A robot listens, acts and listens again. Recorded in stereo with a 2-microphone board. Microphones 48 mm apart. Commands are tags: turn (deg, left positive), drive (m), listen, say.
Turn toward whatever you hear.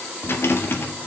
<turn deg="55"/>
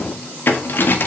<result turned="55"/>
<turn deg="55"/>
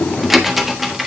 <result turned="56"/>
<say>Facing the rattle.</say>